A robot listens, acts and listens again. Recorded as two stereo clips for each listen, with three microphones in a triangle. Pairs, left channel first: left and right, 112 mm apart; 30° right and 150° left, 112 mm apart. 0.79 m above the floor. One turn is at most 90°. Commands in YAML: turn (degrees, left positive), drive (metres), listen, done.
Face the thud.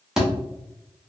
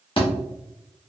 done: "Found it: a thud, straight ahead."